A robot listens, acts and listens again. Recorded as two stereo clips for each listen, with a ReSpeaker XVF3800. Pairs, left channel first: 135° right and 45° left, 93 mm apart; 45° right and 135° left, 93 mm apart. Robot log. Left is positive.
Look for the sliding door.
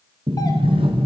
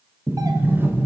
note: The sliding door: 70° left.
cmd yaw +70
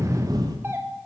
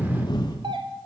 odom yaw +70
end: Found it: a sliding door, straight ahead.